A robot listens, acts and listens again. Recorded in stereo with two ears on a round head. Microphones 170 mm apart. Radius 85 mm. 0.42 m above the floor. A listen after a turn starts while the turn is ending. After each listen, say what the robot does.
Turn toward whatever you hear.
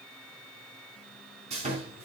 Turn 35° right.
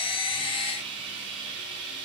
Turn 110° right.
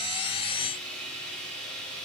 Found it: sawing, straight ahead.